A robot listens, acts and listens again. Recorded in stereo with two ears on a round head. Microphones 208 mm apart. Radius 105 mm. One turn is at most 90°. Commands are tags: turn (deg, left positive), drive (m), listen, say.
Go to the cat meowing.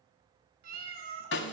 <turn deg="-45"/>
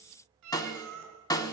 <turn deg="-90"/>
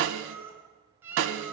<turn deg="-10"/>
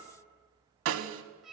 <drive m="1.0"/>
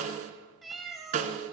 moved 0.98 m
<drive m="1.0"/>
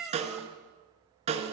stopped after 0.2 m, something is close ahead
<say>Arrived at the cat meowing, straight ahead.</say>